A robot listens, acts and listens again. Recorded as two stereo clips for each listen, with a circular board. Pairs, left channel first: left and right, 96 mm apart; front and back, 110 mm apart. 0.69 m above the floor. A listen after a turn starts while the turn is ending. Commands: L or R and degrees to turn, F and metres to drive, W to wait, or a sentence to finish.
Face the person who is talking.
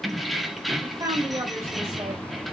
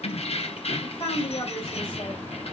R40
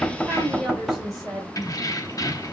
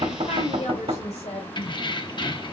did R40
Facing the woman speaking.